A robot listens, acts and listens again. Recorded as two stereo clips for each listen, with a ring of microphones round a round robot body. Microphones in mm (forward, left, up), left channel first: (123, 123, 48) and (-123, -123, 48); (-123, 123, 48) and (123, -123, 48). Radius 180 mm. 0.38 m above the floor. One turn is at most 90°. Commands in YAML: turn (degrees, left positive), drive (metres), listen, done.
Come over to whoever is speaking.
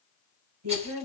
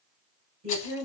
turn: -90
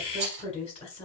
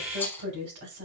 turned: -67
turn: -25
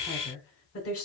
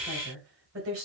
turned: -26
drive: 1.0
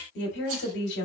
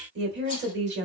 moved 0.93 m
drive: 1.0
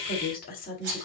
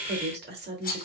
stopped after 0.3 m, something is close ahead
done: "Arrived at the woman speaking, straight ahead."